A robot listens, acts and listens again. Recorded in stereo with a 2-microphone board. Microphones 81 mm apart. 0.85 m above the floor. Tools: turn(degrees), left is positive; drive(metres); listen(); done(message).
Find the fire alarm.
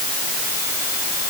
listen()
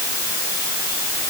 listen()
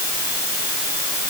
done("I can't make out a fire alarm to turn to.")